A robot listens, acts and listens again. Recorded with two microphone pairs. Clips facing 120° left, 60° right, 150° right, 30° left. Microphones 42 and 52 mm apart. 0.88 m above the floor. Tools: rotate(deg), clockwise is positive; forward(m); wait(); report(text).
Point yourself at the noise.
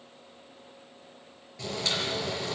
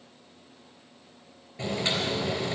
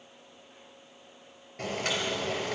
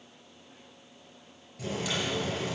rotate(120)
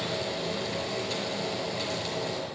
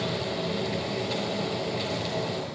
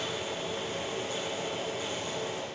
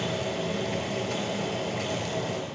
rotate(-20)
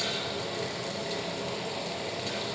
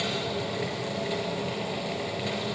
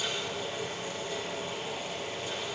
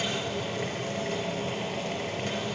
report("Found it: boiling, straight ahead.")